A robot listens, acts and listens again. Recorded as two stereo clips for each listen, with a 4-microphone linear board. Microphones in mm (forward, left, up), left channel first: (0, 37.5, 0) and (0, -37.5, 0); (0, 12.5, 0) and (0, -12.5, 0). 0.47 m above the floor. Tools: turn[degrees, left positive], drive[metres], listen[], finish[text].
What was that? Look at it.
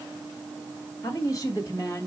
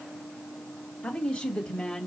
Thought: The woman speaking: about 45° left or 135° left.
Action: turn[45]
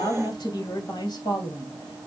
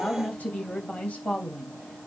Thought: So it is at 110° left.
Action: turn[110]
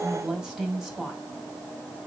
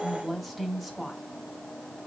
Action: finish[Found it: a woman speaking, straight ahead, 2 to 4 m away.]